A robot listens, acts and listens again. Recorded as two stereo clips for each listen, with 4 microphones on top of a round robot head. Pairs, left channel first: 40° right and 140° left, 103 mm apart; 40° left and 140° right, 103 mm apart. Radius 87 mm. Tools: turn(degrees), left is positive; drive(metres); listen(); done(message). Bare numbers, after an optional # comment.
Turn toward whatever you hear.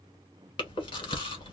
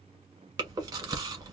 # The chewing: 85° right.
turn(-85)
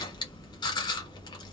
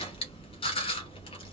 done("Found it: chewing, straight ahead, 1 to 2 m away.")